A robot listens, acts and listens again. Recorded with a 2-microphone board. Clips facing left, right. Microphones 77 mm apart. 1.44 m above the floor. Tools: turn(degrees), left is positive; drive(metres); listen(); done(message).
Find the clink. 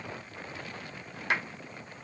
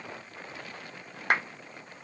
listen()
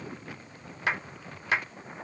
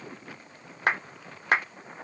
listen()
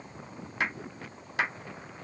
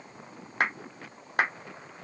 done("I can't make out a clink, only a clap.")